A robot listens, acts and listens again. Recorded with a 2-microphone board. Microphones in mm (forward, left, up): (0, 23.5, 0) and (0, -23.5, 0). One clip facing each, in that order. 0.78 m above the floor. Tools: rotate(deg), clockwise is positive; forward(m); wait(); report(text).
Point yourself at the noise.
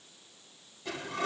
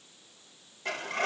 rotate(55)
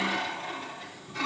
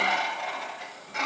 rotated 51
rotate(70)
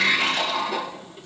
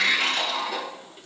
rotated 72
report("Facing the sliding door, 2 to 4 m away.")